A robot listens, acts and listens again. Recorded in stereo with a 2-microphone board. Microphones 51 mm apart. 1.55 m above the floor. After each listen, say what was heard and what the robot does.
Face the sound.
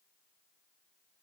Keep listening.
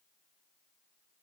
Keep listening.
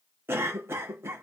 The cough: about 55° right or 125° right. Turn 55° right.
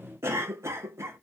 So it is at 65° right. Turn 65° right.
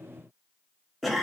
Found it: a cough, straight ahead.